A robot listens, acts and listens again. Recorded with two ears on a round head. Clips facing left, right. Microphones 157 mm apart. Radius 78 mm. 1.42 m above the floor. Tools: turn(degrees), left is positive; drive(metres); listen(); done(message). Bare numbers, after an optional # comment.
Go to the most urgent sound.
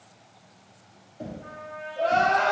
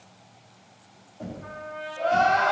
turn(90)
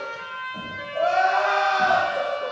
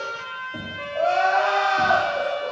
drive(1.0)
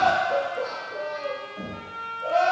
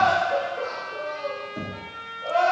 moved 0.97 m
# The crying is now 20° left.
turn(20)
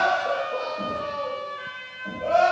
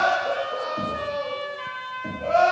drive(1.0)
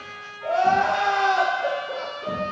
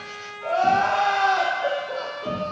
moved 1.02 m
drive(1.0)
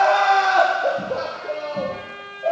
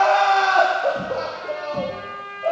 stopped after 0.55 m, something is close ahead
done("Arrived at the crying, straight ahead.")